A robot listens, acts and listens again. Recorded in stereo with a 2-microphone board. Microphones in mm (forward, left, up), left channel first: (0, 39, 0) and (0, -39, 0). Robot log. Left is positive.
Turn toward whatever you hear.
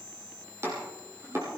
note: The chopping: about 35° right or 145° right.
cmd yaw -35
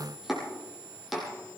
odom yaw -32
end: Facing the chopping.